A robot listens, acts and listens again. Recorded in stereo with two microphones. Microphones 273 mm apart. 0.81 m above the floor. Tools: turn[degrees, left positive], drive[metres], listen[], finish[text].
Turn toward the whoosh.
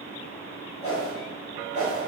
Thought: The whoosh: about 50° left or 130° left.
Action: turn[50]
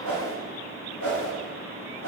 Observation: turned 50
Thought: So it is at 80° left.
Action: turn[80]
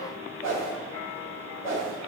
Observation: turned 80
Thought: The whoosh is now 10° right.
Action: turn[-10]
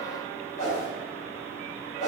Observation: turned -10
Action: finish[Facing the whoosh, 2 to 4 m away.]